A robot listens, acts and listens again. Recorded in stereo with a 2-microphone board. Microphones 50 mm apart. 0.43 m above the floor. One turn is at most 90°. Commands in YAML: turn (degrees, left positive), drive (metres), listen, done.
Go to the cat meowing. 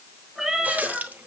turn: 30
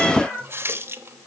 turn: 90
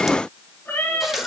turn: 45
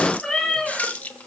drive: 1.0
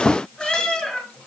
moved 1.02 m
drive: 1.0
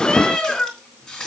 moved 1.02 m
turn: 15
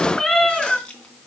drive: 1.0
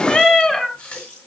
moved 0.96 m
drive: 1.0
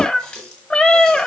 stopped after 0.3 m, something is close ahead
turn: 10
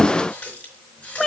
done: "Arrived at the cat meowing, straight ahead."